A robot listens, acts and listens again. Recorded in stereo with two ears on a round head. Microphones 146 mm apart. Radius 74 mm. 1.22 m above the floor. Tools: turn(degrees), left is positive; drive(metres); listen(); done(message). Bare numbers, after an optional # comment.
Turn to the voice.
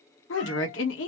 turn(90)
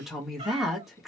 done("Facing the woman speaking.")